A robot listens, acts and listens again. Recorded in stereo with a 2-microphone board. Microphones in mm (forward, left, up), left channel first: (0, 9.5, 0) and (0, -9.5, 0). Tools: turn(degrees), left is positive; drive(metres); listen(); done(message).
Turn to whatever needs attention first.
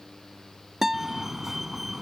turn(degrees=-20)
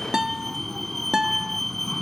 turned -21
done("Found it: a fire alarm, straight ahead.")